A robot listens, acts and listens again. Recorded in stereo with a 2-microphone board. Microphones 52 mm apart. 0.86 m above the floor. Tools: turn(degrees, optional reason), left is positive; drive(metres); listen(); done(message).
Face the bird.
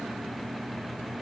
listen()
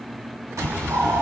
turn(degrees=-70, reason="The bird: about 70° right or 110° right.")
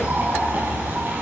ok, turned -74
turn(degrees=-35, reason="So it is at 35° right.")
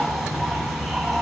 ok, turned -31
done("Facing the bird.")